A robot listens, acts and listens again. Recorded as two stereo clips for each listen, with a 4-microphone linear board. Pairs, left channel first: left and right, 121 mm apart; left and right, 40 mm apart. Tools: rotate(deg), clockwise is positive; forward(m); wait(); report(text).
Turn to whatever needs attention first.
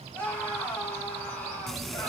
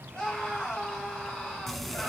rotate(-30)
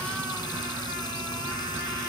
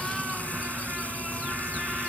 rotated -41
wait()
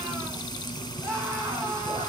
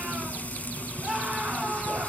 rotate(25)
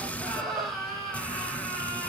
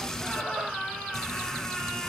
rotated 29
report("Facing the scream.")